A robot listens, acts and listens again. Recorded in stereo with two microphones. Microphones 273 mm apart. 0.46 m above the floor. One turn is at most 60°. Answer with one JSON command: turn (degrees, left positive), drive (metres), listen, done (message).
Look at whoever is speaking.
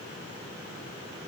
{"listen": true}
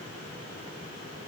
{"listen": true}
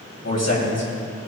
{"turn": 60}
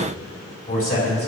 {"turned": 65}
{"turn": 40}
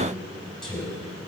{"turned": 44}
{"done": "Facing the man speaking, over 4 m away."}